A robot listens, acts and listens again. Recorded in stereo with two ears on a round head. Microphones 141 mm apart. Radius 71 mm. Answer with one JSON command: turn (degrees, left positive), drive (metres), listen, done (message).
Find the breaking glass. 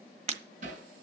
{"turn": -45}
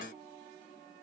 {"listen": true}
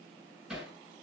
{"done": "I heard breaking glass, but can't make it out now. It was about straight ahead or 90° right."}